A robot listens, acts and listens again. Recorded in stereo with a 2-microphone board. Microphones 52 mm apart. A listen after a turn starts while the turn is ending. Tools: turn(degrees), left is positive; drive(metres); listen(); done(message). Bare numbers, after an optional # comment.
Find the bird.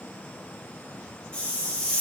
listen()
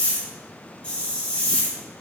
listen()
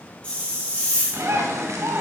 turn(-90)
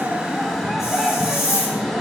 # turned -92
done("Found it: a bird, straight ahead.")